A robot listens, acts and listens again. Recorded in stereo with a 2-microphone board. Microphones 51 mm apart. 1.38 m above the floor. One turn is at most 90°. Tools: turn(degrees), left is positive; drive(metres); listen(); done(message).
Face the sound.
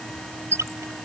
turn(degrees=-75)
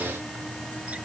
listen()
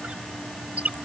turn(degrees=-25)
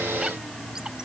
listen()
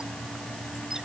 listen()
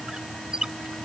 turn(degrees=-15)
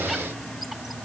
listen()
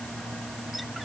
listen()
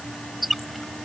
done("Facing the squeak.")